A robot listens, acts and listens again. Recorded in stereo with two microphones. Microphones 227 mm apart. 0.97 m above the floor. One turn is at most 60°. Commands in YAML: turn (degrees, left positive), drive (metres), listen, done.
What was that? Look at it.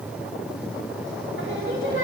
turn: -60
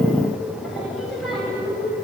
done: "Found it: singing, straight ahead, over 4 m away."